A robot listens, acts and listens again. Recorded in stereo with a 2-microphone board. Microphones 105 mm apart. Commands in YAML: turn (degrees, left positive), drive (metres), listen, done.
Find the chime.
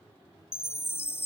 turn: 25
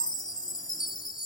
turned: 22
turn: 130
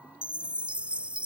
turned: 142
turn: -15
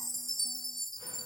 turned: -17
done: "Facing the chime."